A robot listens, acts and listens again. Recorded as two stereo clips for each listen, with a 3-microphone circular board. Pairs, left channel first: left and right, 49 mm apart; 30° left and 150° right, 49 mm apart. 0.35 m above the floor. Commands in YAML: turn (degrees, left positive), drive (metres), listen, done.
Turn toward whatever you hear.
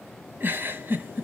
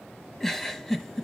turn: -50
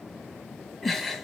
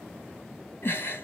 done: "Facing the giggle."